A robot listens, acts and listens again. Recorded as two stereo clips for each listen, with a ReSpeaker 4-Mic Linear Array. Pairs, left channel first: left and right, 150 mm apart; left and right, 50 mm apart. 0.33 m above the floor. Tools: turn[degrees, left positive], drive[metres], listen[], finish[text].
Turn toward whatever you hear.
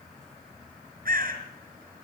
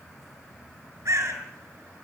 Thought: The bird: about 70° right or 110° right.
Action: turn[-70]
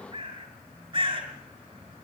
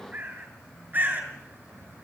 Thought: So it is at 35° right.
Action: turn[-35]
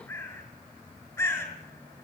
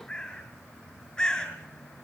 Thought: The bird is now 20° left.
Action: turn[20]
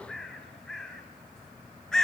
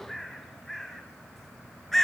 Action: finish[Found it: a bird, straight ahead.]